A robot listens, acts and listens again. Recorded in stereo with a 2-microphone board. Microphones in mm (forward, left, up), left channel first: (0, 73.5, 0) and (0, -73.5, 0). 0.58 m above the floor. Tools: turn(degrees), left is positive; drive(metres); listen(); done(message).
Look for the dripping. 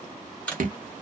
turn(degrees=-70)
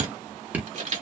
turn(degrees=-10)
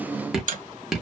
done("Found it: dripping, straight ahead.")